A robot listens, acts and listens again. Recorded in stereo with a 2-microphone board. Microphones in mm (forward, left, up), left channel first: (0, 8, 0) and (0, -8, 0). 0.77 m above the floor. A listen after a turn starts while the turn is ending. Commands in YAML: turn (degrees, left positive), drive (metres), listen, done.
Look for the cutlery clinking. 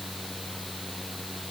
listen: true
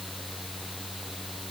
listen: true
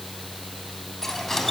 turn: 20
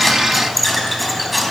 done: "Found it: cutlery clinking, straight ahead."